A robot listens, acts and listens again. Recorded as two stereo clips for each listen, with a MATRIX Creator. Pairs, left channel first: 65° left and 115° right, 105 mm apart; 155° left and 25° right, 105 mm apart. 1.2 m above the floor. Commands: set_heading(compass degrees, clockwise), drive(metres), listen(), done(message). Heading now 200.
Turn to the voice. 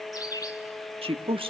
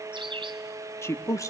set_heading(345)
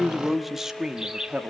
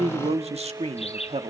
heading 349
set_heading(24)
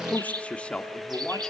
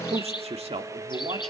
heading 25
set_heading(40)
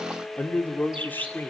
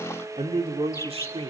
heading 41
done("Found it: a man speaking, straight ahead.")